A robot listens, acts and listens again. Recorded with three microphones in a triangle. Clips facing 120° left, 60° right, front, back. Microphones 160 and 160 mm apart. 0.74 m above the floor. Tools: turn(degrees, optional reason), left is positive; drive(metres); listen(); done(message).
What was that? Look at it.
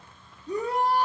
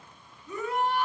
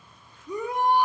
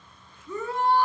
turn(degrees=70, reason="The shout: 70° left.")
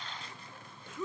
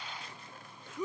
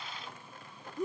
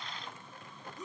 turn(degrees=15, reason="The shout is now 15° left.")
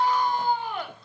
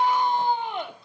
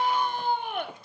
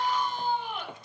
done("Found it: a shout, straight ahead, 2 to 4 m away.")